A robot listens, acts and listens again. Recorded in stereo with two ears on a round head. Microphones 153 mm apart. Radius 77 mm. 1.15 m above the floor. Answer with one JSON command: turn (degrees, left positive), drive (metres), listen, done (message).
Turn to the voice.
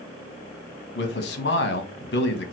{"turn": 65}
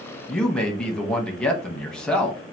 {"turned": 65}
{"done": "Facing the man speaking, 1 to 2 m away."}